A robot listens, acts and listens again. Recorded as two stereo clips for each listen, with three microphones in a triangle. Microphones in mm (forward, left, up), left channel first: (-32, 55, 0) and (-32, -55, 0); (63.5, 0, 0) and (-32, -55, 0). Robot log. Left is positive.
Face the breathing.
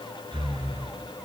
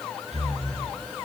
note: The breathing: 135° right.
cmd yaw -135
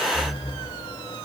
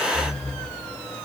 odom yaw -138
end: Facing the breathing, over 4 m away.